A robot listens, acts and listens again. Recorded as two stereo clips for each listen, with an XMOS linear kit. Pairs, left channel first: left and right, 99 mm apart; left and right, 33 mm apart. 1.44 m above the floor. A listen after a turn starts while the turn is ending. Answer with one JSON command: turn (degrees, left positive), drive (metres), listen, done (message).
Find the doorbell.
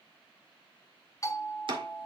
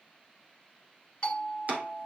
{"turn": 30}
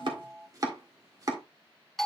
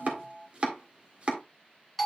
{"done": "Found it: a doorbell, straight ahead."}